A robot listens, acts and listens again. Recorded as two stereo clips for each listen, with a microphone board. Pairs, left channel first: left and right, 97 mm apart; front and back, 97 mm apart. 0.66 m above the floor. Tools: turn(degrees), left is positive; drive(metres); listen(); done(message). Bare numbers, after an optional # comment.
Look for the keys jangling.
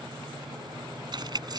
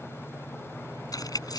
# The keys jangling: 45° right.
turn(-45)
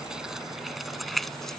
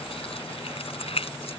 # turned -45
done("Facing the keys jangling.")